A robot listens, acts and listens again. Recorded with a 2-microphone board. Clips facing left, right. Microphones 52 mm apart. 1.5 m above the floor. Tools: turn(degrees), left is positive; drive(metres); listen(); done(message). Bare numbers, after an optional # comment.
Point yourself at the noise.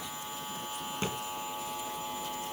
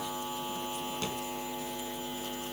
# The thud: about 30° left or 150° left.
turn(30)
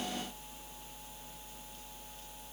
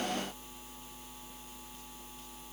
listen()
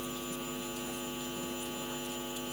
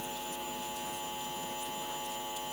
done("I heard a thud, but can't make it out now. It was about straight ahead or 120° left.")